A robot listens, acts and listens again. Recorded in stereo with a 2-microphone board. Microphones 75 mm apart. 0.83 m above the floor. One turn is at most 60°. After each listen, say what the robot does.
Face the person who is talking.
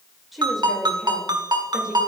Turn 30° right.
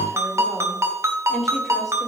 Turn 30° left.
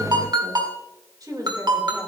Turn 55° right.
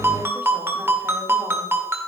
Keep listening.
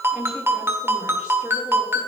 Turn 20° right.
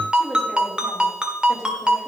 Found it: a woman speaking, straight ahead, 2 to 4 m away.